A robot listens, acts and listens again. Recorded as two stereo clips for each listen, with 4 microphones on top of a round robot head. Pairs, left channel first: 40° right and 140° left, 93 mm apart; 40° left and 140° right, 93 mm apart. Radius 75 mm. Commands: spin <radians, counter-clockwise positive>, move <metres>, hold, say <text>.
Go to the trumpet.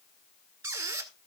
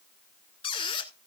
hold
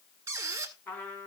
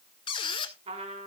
spin -2.01
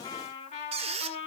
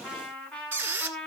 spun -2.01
spin -0.61
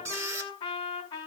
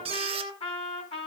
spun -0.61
spin 0.17
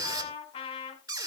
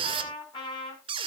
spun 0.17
move 1.0
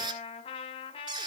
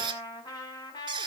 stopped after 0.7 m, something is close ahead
say Something is in my way. I am facing the trumpet but have not reached it.